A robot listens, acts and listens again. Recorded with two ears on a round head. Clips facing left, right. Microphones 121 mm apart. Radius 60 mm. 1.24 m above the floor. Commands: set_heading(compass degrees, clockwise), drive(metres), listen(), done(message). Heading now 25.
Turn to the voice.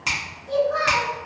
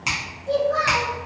set_heading(80)
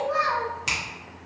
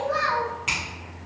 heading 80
set_heading(150)
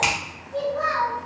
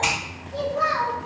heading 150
set_heading(170)
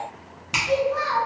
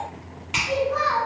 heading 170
done("Found it: a child speaking, straight ahead.")